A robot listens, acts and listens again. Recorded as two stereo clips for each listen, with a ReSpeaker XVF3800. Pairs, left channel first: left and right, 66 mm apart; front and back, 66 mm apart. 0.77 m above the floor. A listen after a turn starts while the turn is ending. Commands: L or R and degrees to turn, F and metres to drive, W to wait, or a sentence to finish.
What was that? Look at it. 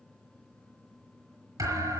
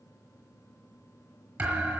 R110
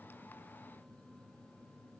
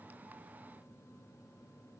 Facing where the thud came from. I can't hear it now.